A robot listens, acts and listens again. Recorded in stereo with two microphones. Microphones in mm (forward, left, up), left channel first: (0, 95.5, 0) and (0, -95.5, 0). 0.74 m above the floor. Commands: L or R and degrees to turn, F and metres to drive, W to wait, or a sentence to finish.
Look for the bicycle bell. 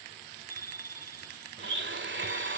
L50
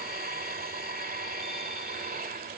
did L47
W
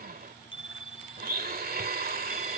L85
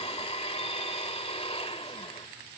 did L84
W
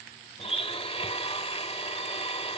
W
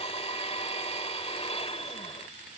Facing where the bicycle bell came from. I can't hear it now.